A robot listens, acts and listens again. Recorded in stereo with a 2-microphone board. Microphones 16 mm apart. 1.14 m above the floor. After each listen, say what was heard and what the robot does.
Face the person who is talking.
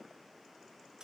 Keep listening.
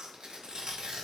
Keep listening.
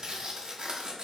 I can't make out anyone speaking, only tearing paper.